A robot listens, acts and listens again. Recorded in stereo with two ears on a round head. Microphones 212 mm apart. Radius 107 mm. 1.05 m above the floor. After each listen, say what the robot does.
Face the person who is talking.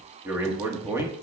Turn 30° right.
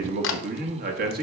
Turn 140° right.
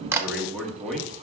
Facing the man speaking, 1 to 2 m away.